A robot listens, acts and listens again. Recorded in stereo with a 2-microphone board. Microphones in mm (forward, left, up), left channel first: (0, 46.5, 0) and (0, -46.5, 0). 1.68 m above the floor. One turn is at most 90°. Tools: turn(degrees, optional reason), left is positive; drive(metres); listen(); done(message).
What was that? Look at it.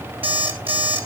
turn(degrees=-70, reason="The alarm clock: about 70° right or 110° right.")
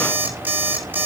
turn(degrees=-20, reason="So it is at 20° right.")
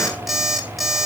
done("Found it: an alarm clock, straight ahead.")